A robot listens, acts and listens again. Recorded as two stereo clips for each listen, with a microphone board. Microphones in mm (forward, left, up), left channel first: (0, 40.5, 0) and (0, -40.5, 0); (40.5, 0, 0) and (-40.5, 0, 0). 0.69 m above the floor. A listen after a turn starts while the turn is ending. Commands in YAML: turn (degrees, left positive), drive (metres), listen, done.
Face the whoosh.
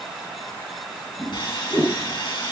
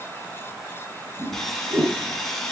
turn: 165
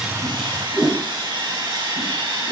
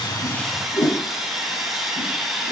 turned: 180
turn: -15
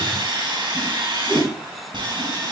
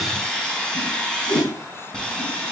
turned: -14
done: "Facing the whoosh."